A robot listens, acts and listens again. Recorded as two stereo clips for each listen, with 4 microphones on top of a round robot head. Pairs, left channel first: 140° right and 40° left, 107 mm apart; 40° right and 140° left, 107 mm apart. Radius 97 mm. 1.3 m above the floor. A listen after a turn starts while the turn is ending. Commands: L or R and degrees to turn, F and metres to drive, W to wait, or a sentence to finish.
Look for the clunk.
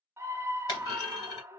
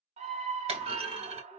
L165
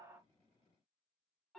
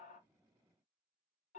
Facing where the clunk came from. I can't hear it now.